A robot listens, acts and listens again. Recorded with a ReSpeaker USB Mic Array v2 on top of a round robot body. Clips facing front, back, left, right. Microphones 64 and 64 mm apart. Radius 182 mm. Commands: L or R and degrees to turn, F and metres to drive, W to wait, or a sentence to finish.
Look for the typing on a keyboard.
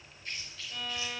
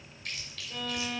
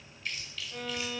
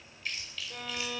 W
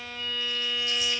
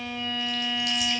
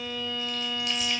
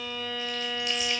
W
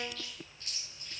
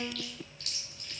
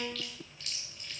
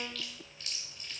I can't make out typing on a keyboard, only a violin and chewing.